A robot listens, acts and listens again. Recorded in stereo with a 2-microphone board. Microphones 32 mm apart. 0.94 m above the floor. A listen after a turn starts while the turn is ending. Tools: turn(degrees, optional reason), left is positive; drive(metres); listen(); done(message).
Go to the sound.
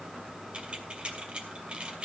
turn(degrees=-35, reason="The keys jangling: about 35° right or 145° right.")
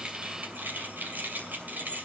turn(degrees=-110, reason="So it is at 110° right.")
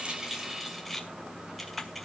drive(metres=1.0)
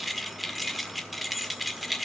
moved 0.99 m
drive(metres=1.0)
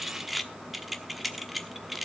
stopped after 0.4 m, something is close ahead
done("Arrived at the keys jangling, straight ahead.")